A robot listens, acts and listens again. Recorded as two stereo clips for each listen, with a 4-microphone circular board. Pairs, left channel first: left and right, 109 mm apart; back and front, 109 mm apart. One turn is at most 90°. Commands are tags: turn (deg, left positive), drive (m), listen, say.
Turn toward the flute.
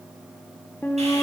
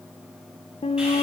<turn deg="90"/>
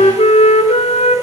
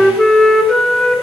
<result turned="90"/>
<turn deg="90"/>
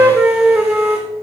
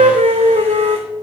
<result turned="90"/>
<turn deg="-10"/>
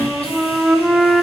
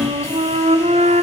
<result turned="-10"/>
<say>Facing the flute, under 1 m away.</say>